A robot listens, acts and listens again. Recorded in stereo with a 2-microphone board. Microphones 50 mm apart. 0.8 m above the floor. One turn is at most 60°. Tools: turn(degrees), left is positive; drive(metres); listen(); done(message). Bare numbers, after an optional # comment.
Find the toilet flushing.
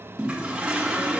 # The toilet flushing: about 20° right or 160° right.
turn(-20)
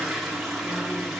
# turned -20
done("Facing the toilet flushing.")